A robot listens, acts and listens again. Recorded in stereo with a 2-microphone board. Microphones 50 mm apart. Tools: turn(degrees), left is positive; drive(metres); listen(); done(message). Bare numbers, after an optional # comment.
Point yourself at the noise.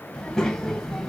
turn(30)
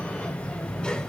turn(30)
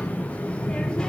# The child speaking: about 15° left or 165° left.
turn(15)
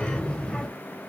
turn(30)
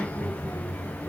# So it is at 155° left.
turn(155)
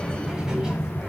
# The child speaking is now 10° right.
turn(-10)
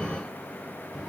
done("Found it: a child speaking, straight ahead, 1 to 2 m away.")